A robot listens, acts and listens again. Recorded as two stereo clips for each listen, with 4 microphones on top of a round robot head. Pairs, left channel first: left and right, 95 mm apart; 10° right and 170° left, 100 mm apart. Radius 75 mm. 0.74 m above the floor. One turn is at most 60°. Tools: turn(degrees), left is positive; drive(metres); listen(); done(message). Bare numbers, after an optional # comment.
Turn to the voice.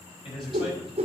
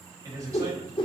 # The man speaking: 115° left.
turn(60)
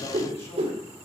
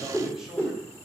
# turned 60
# Nothing new. It was at 55° left.
turn(55)
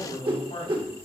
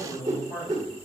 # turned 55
# The man speaking is now 50° left.
turn(50)
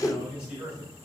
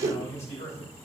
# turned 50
# The man speaking is now 10° right.
turn(-10)
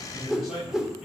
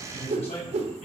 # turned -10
done("Facing the man speaking, over 4 m away.")